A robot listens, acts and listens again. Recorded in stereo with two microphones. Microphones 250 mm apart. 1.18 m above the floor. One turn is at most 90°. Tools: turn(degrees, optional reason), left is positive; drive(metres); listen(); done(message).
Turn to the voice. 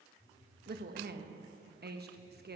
turn(degrees=-45, reason="The woman speaking: about 45° right or 135° right.")
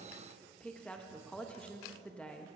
done("Found it: a woman speaking, straight ahead, 1 to 2 m away.")